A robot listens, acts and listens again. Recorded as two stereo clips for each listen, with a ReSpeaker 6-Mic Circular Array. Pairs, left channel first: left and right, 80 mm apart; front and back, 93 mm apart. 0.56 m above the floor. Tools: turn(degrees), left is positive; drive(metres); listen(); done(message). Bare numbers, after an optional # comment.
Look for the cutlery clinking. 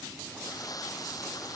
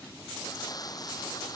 listen()
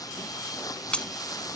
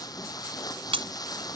# The cutlery clinking: 165° left.
turn(165)
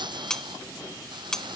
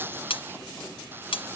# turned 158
done("Facing the cutlery clinking.")